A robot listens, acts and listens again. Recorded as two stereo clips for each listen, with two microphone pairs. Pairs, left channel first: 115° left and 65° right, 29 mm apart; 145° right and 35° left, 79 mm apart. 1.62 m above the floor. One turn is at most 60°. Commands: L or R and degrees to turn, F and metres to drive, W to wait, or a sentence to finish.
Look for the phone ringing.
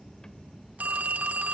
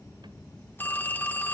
R60
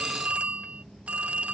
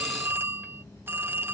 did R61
R20
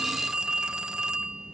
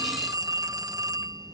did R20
Found it: a phone ringing, straight ahead.